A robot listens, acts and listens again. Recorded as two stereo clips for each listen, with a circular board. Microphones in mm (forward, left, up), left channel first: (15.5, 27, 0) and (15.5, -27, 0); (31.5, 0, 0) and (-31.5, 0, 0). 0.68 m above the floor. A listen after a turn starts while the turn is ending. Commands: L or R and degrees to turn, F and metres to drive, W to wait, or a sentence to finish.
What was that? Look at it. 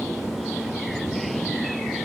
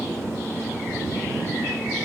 W
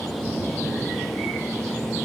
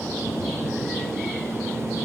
W
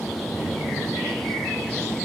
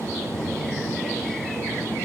I can't make out anything to turn to.